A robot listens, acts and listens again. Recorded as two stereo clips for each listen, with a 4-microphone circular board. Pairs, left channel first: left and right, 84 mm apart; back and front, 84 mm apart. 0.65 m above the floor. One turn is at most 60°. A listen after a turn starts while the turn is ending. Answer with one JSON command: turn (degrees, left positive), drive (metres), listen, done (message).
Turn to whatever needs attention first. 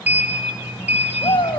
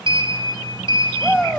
{"turn": 60}
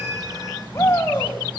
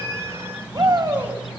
{"turn": 30}
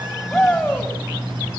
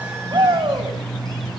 {"turn": 10}
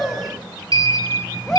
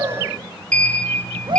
{"done": "Facing the shout."}